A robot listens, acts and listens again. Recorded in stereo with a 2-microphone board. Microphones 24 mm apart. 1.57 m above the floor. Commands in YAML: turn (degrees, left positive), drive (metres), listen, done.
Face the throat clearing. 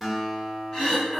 turn: 30
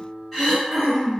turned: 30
done: "Facing the throat clearing."